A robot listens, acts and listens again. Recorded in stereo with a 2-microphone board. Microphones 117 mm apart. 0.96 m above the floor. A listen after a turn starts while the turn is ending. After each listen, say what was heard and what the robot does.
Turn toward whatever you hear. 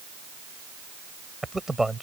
Turn 30° right.
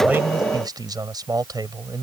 So it is at 145° right. Turn 145° right.
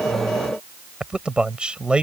The man speaking is now 10° right. Turn 10° right.
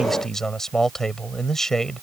Facing the man speaking.